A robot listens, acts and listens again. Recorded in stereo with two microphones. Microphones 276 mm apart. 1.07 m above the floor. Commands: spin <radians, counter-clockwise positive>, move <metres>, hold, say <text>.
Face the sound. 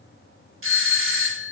spin -0.87
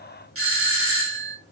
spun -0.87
spin -1.22
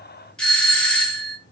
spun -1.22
say Found it: a doorbell, straight ahead, under 1 m away.